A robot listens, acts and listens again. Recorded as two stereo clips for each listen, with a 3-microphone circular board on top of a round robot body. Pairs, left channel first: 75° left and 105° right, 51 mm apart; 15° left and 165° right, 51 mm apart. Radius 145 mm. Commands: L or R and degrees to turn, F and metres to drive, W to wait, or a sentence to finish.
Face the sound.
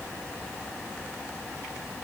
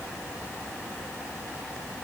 W
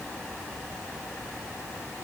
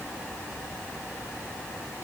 W
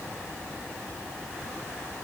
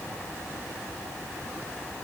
I can't make out anything to turn to.